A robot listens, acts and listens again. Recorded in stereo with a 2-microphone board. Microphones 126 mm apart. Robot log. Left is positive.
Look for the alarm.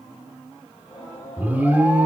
cmd yaw -30
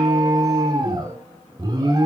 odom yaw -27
note: So it is at 140° right.
cmd yaw -140
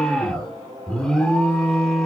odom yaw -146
end: Facing the alarm, 2 to 4 m away.